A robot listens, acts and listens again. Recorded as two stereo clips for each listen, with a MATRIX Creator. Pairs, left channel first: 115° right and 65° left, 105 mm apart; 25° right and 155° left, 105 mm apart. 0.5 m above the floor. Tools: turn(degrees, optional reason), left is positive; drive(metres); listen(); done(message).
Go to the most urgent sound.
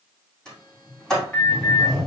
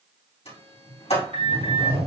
turn(degrees=170, reason="The alarm: 170° left.")
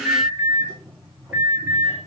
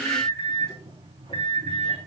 turn(degrees=-10, reason="The alarm is now 10° right.")
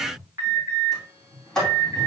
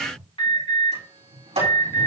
drive(metres=1.0)
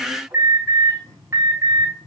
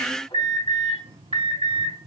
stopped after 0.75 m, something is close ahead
done("Something is in my way. I am facing the alarm but have not reached it.")